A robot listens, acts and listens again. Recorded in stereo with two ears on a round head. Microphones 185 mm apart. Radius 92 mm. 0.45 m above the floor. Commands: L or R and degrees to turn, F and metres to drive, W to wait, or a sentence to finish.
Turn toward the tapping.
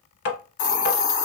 L50
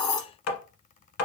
L80
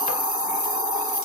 W
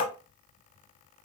L35
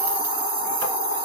W
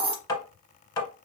L20
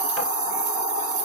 W
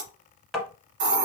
Facing the tapping.